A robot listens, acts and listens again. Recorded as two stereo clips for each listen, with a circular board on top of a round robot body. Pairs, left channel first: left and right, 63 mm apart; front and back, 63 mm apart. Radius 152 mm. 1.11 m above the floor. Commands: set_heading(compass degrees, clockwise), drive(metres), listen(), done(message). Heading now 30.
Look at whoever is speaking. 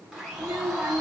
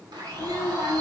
set_heading(45)
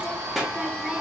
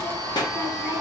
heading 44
done("Facing the child speaking, under 1 m away.")